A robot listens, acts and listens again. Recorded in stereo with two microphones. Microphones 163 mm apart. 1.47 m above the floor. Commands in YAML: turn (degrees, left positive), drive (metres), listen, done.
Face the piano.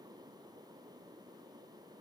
listen: true
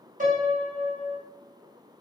turn: -55
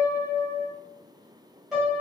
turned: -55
done: "Found it: a piano, straight ahead, 1 to 2 m away."